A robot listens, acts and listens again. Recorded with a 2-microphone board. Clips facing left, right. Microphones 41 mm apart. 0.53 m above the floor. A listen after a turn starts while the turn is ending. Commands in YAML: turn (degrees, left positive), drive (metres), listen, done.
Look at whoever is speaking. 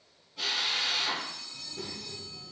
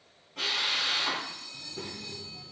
turn: -15
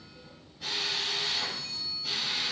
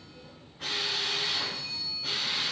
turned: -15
turn: -150
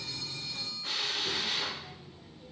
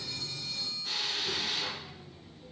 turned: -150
turn: 25
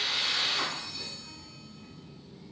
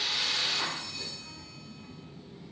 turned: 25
done: "Found it: a child speaking, straight ahead, under 1 m away."